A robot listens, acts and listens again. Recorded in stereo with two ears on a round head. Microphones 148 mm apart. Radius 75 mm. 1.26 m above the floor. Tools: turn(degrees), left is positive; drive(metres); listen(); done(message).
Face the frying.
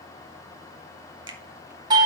listen()
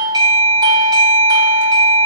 listen()
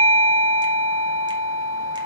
done("I can't make out frying, only a doorbell.")